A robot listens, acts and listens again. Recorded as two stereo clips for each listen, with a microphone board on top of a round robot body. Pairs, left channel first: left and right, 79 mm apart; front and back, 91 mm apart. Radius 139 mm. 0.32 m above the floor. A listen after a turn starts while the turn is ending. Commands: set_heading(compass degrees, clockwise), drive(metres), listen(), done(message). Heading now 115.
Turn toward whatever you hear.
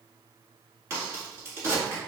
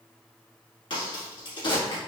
set_heading(150)
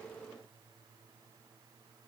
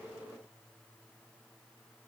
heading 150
done("I heard a crack from this way, but can't make it out now.")